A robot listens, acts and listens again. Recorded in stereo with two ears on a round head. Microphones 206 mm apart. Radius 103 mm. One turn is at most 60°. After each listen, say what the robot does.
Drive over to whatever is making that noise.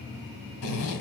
Turn 60° left.
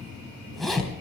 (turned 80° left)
Drive 1.0 m forward.
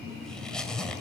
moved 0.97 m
Drive 1.0 m forward.
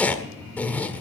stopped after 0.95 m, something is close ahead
Turn 10° left.
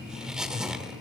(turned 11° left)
Arrived at the zipper, straight ahead.